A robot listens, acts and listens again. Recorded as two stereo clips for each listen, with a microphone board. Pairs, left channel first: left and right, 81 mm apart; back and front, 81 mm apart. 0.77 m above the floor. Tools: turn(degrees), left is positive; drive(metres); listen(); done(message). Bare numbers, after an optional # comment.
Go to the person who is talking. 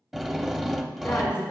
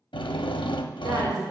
# The woman speaking: 35° left.
turn(35)
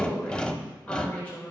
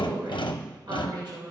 # The woman speaking is now 20° left.
turn(20)
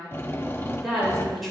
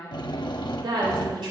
drive(1.0)
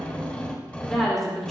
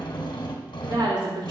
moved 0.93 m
drive(1.0)
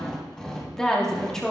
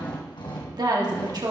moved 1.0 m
# The woman speaking is now 10° left.
turn(10)
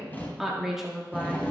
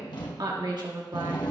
drive(1.0)
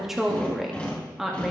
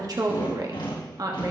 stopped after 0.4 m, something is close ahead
done("I am next to the woman speaking.")